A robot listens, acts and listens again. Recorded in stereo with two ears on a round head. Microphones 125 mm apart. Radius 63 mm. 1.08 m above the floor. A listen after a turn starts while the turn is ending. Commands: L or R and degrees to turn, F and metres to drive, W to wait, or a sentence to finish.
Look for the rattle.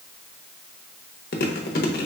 W
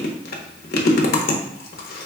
W
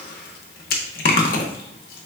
I can't make out a rattle, only chewing.